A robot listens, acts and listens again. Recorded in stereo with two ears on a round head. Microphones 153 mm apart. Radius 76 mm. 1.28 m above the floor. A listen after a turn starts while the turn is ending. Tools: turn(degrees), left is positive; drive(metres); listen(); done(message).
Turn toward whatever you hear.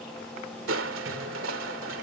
turn(degrees=-90)
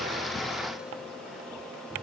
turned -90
listen()
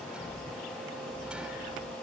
done("Facing the crushing.")